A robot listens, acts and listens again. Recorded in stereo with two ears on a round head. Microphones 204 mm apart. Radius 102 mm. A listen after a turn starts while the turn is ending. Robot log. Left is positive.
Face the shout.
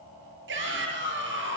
note: The shout: about 55° right or 125° right.
cmd yaw -55
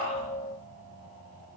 cmd idle
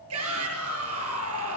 note: So it is at 70° right.
cmd yaw -70
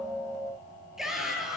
end: Found it: a shout, straight ahead, over 4 m away.